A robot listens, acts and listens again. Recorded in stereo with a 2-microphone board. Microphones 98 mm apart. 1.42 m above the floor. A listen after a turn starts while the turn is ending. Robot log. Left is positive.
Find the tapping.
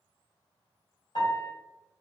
cmd idle
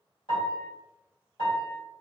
cmd idle
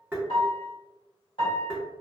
note: The tapping: about 20° right or 160° right.
cmd yaw -20
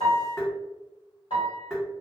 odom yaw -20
end: Facing the tapping, under 1 m away.